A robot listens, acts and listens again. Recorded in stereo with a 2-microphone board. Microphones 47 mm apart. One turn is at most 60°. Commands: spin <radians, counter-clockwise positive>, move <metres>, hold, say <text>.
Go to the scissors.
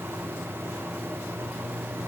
hold
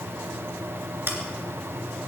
spin -0.96
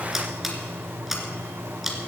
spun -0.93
move 1.0
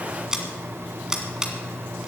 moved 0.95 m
spin -0.35
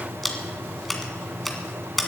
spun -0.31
move 1.0
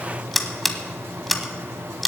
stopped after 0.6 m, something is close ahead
say I am next to the scissors.